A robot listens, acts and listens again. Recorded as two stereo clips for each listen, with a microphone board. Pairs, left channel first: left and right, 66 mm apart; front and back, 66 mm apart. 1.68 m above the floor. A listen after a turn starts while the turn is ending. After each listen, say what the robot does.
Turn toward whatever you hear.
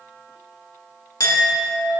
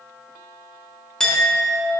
Turn 80° left.
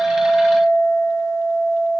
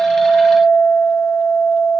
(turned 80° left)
Turn 15° right.
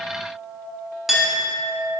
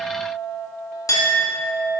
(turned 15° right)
Facing the clink.